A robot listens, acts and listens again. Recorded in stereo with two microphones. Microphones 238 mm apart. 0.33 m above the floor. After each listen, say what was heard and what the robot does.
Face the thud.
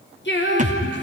The thud: about 30° right or 150° right. Turn 30° right.
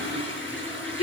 Keep listening.
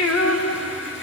I heard a thud, but can't make it out now. It was about straight ahead or 120° right.